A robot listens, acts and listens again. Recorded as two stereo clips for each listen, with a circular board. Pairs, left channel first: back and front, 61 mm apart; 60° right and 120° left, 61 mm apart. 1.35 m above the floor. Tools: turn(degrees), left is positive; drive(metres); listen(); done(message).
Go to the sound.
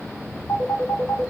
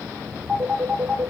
turn(degrees=-165)
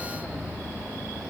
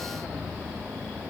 listen()
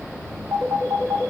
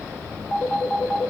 turn(degrees=15)
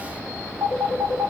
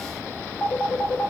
drive(metres=1.0)
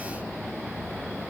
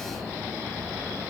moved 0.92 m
listen()
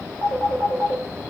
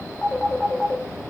drive(metres=1.0)
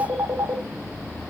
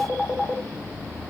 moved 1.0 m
turn(degrees=15)
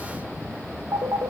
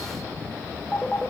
drive(metres=1.0)
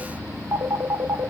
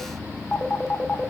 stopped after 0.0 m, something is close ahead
done("Arrived at the phone ringing, straight ahead.")